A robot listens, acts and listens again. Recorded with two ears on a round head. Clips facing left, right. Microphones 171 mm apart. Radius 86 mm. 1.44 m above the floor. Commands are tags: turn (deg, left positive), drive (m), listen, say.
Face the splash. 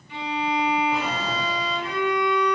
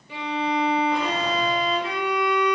<listen/>
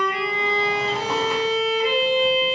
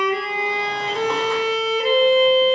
<listen/>
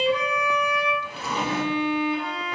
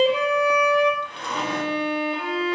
<say>I can't make out a splash, only a violin and a drawer.</say>